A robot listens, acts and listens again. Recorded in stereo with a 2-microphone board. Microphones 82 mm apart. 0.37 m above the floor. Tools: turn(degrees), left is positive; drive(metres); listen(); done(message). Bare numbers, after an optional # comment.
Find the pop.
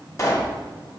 # The pop: about 40° left or 140° left.
turn(40)
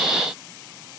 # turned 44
listen()
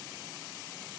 done("I heard a pop, but can't make it out now. It was about 5° right or 100° left.")